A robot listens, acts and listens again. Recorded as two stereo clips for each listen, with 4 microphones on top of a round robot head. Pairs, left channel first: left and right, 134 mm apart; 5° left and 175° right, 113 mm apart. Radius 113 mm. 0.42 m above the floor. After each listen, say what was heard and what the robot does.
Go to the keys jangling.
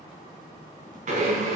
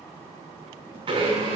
Keep listening.
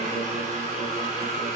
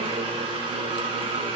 Keep listening.
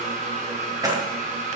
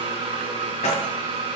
The keys jangling: 25° right. Turn 25° right.
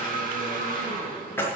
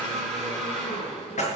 The keys jangling is now 15° left. Turn 15° left.
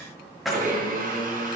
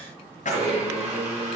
Drive 1.0 m forward.
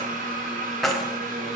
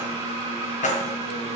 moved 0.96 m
Drive 1.0 m forward.
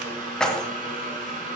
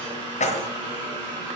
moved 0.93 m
Drive 1.0 m forward.
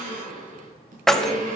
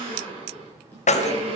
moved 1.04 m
Drive 1.0 m forward.
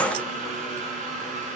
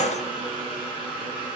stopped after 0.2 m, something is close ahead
The keys jangling is now 10° left. Turn 10° left.
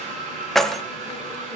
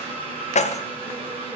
I am next to the keys jangling.